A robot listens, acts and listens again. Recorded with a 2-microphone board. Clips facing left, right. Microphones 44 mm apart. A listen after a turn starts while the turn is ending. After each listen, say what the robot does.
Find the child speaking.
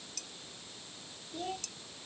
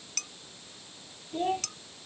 Turn 35° right.
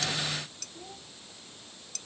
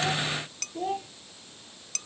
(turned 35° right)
Turn 110° right.
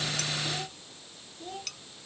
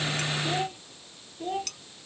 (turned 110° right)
Turn 35° right.
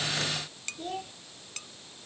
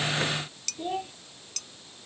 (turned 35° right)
Turn 20° right.
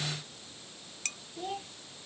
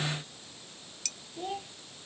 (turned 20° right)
Facing the child speaking.